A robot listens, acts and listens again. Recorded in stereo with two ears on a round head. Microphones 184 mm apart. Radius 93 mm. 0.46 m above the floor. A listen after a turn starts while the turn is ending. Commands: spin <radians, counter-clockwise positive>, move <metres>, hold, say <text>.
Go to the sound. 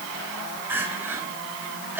spin -0.52
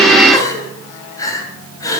spin 0.35
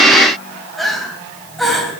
move 1.0
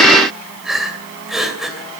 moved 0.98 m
move 1.0
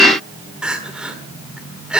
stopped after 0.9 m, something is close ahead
say Arrived at the crying, straight ahead.